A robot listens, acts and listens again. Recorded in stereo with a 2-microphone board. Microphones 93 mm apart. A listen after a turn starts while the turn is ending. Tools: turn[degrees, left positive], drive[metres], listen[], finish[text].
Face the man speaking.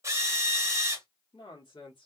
Thought: The man speaking: about 70° left or 110° left.
Action: turn[70]
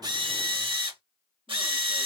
Action: listen[]
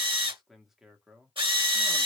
Thought: So it is at 10° right.
Action: turn[-10]
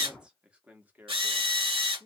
Thought: The man speaking is now 20° right.
Action: turn[-20]
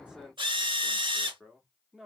Action: finish[Found it: a man speaking, straight ahead.]